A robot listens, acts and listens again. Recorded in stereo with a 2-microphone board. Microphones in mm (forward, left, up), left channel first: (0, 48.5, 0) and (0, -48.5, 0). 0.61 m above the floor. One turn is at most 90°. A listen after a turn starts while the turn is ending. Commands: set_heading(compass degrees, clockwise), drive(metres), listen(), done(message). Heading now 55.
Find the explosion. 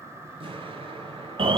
set_heading(125)
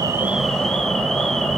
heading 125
listen()
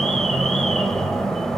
done("I heard an explosion, but can't make it out now. It was about straight ahead or 40° right.")